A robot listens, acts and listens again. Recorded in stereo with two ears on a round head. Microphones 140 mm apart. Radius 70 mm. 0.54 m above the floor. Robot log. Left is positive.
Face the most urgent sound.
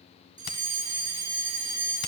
note: The fire alarm: about 25° right or 155° right.
cmd yaw -25
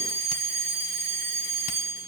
note: So it is at 125° right.
cmd yaw -125
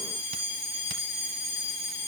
note: The fire alarm is now 10° right.
cmd yaw -10
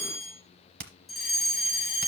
end: Facing the fire alarm.